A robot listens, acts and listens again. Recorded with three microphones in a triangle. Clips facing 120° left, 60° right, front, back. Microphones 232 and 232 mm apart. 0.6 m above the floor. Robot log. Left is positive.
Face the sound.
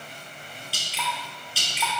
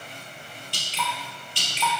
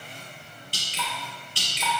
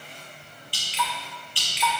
note: The dripping: 35° left.
cmd yaw +35
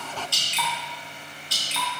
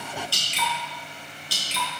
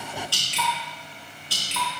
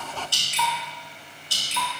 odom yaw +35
end: Found it: dripping, straight ahead.